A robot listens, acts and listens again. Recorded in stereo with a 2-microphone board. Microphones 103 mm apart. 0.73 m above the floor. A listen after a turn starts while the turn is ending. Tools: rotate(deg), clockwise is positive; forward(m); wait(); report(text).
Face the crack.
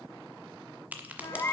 rotate(15)
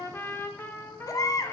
wait()
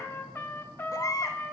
report("I heard a crack, but can't make it out now. It was about straight ahead or 150° right.")